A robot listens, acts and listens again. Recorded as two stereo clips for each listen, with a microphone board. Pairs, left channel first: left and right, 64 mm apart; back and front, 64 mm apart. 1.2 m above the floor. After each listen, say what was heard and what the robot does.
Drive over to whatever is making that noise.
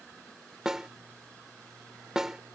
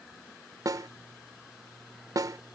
The snare drum: 10° right. Turn 10° right.
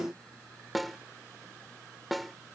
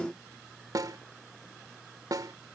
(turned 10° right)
Drive 1.0 m forward.
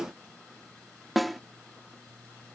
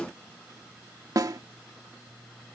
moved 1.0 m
Drive 1.0 m forward.
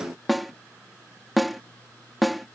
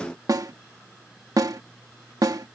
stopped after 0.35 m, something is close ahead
Arrived at the snare drum, straight ahead.